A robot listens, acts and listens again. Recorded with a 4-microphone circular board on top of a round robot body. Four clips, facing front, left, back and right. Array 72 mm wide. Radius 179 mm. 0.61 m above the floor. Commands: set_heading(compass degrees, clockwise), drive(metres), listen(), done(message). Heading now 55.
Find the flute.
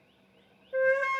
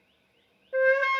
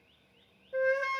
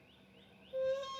set_heading(345)
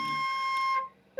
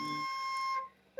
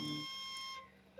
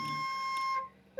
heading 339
done("Facing the flute.")